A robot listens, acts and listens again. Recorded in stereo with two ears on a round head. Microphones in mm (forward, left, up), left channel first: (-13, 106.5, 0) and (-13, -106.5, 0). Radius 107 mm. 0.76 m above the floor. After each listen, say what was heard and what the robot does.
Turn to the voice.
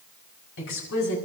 The woman speaking: about 55° left or 125° left. Turn 55° left.
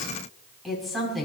Found it: a woman speaking, straight ahead, over 4 m away.